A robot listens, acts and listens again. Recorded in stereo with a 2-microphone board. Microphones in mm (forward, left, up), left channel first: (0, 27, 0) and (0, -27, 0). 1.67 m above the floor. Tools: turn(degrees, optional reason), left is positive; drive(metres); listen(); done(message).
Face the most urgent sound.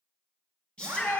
turn(degrees=20, reason="The shout: about 20° left or 160° left.")
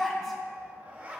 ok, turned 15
done("Facing the shout, 2 to 4 m away.")